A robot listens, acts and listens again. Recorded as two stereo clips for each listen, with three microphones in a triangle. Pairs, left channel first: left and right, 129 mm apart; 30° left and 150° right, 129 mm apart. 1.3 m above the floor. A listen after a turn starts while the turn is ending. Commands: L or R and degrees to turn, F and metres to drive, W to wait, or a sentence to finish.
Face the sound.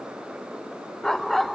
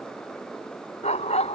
Found it: a dog barking, straight ahead.